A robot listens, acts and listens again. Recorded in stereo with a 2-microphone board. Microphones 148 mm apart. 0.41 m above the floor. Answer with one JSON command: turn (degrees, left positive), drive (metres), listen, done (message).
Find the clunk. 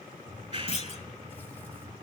{"turn": 45}
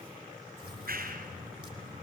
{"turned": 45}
{"listen": true}
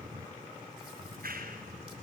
{"done": "I heard a clunk, but can't make it out now. It was about straight ahead or 90° left."}